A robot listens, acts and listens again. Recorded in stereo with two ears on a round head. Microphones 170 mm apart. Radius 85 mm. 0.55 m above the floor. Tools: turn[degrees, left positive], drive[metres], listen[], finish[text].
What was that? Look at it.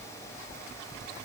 Action: listen[]
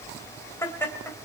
Action: turn[30]
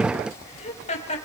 Thought: So it is at 145° left.
Action: turn[145]
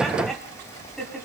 Action: finish[Found it: laughter, straight ahead.]